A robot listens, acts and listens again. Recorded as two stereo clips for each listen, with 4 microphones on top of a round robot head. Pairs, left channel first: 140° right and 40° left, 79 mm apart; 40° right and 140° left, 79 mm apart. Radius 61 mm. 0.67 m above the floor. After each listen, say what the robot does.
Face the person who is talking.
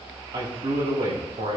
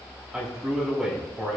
Turn 55° left.
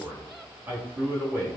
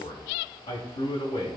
Turn 30° right.
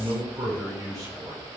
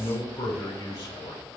Turn 10° right.
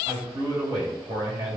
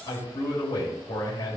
Facing the man speaking, 2 to 4 m away.